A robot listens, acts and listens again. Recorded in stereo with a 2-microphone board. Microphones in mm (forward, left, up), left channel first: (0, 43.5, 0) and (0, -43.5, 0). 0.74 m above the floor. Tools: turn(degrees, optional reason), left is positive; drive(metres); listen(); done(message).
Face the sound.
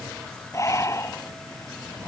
turn(degrees=35, reason="The breathing: about 35° left or 145° left.")
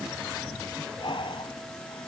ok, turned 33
turn(degrees=110, reason="So it is at 110° left.")
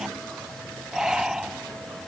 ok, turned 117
done("Found it: breathing, straight ahead.")